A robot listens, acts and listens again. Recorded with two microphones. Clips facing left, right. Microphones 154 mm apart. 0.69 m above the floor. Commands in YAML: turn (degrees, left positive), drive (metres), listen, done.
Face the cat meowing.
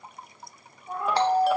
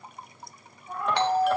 turn: 30
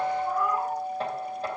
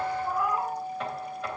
done: "Facing the cat meowing."